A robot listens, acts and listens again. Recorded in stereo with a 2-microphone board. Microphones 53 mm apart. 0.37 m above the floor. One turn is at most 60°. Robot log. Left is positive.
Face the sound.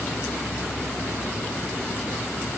cmd idle
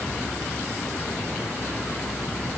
cmd idle
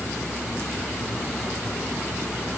end: I can't make out anything.